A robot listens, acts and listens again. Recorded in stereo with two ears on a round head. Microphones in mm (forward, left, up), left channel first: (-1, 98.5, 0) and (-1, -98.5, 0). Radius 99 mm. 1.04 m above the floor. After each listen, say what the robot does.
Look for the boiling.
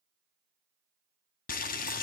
Turn 40° left.
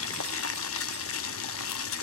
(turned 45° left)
Turn 90° left.
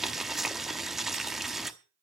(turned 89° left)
Found it: boiling, straight ahead, under 1 m away.